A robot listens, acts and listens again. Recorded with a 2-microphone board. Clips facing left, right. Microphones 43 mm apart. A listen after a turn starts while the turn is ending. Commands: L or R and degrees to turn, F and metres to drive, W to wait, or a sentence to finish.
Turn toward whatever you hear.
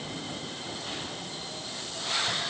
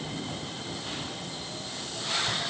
W
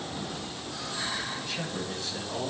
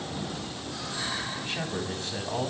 R45
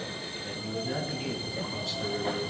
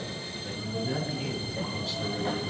Facing the man speaking.